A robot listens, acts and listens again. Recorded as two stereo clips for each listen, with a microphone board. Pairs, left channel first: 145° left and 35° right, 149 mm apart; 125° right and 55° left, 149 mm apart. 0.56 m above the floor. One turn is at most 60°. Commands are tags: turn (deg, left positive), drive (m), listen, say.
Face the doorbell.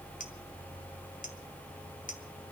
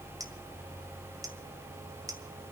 <listen/>
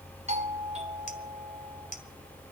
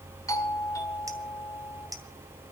<turn deg="-60"/>
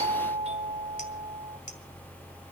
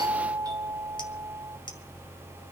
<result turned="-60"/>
<say>Found it: a doorbell, straight ahead.</say>